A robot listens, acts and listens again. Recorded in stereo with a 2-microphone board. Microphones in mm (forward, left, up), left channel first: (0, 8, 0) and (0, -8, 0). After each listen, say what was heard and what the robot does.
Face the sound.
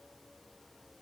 Keep listening.
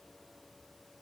Keep listening.
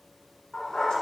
The dog barking: about 70° left or 110° left. Turn 70° left.
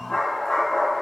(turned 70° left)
So it is at 60° left. Turn 60° left.
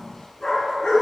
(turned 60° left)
The dog barking is now 40° left. Turn 40° left.
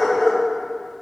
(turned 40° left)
Facing the dog barking, 2 to 4 m away.